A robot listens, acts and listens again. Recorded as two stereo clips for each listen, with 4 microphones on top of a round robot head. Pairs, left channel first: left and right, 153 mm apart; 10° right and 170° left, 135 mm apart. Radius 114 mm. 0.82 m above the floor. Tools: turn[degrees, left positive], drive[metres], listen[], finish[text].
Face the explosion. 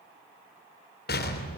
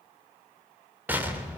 Thought: The explosion: 95° left.
Action: turn[95]
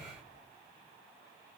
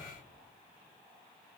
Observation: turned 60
Thought: Nothing new. It was at 35° left.
Action: turn[35]
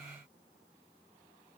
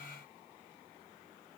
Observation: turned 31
Action: finish[Facing where the explosion came from. I can't hear it now.]